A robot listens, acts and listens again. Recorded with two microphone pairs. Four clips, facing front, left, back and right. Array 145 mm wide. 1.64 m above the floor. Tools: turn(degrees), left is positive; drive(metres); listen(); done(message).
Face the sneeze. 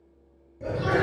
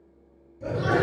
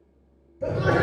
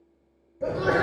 turn(degrees=-130)
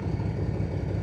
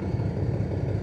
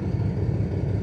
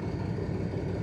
done("Facing where the sneeze came from. I can't hear it now.")